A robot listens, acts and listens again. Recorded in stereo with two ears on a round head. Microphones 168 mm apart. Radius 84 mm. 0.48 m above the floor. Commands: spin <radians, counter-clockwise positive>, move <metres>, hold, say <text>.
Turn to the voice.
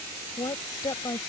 spin 0.35
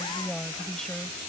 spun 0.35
say Found it: a woman speaking, straight ahead.